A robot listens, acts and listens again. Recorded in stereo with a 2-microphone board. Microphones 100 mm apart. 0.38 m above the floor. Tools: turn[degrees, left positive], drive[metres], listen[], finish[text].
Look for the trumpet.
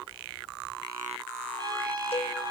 Thought: The trumpet: about 45° right or 135° right.
Action: turn[-45]
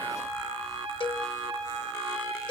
Thought: So it is at 90° right.
Action: turn[-90]
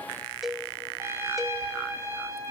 Thought: The trumpet is now 30° right.
Action: turn[-30]
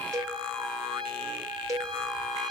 Action: finish[Facing the trumpet.]